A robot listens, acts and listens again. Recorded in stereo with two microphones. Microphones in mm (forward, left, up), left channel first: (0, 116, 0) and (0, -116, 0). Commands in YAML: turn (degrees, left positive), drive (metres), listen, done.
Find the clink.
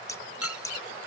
turn: 90
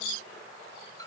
turn: 15
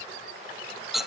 done: "Facing the clink."